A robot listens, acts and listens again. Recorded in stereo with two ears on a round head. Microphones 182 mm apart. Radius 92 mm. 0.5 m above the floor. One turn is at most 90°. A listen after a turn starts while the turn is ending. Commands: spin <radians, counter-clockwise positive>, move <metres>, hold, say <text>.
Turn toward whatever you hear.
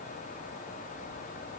hold
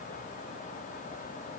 hold
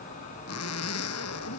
spin 1.57
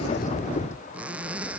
say Facing the zipper.